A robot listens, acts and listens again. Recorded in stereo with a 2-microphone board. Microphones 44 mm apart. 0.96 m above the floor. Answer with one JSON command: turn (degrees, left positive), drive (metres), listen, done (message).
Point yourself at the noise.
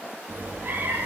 {"turn": -45}
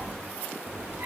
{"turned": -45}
{"turn": -80}
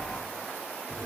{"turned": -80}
{"done": "Facing the cat meowing."}